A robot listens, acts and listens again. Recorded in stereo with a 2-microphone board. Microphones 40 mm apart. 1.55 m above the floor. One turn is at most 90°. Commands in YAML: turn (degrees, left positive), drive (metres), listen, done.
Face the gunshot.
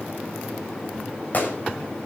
turn: 45
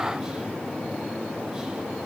listen: true
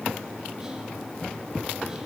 done: "I heard a gunshot, but can't make it out now. It was about straight ahead or 90° left."